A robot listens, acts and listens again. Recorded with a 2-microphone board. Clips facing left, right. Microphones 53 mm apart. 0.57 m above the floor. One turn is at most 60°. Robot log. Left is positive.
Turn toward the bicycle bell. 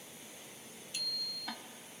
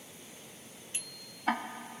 note: The bicycle bell: about 25° right or 155° right.
cmd yaw -25
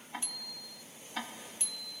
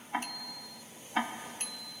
note: So it is at 130° right.
cmd yaw -60
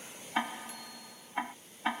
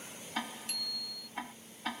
note: The bicycle bell is now 75° right.
cmd yaw -60
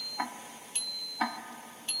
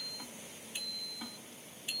note: The bicycle bell is now 10° right.
cmd yaw -10
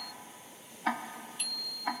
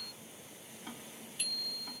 end: Facing the bicycle bell.